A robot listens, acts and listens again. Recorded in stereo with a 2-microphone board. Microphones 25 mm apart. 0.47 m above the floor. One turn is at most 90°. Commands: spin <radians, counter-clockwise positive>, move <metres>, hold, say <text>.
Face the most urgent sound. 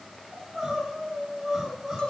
spin -0.26
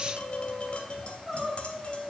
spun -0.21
say Facing the crying, over 4 m away.